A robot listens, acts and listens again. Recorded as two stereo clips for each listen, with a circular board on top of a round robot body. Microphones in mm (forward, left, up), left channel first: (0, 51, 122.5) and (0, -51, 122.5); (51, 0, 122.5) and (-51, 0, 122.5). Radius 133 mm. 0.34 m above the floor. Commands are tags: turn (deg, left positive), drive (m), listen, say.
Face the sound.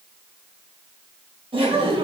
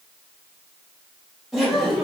<turn deg="-95"/>
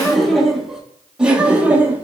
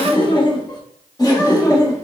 <turn deg="-25"/>
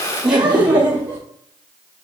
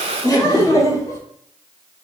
<turn deg="-30"/>
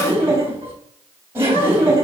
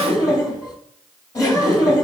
<turn deg="-35"/>
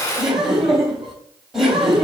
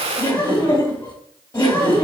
<say>Facing the laughter.</say>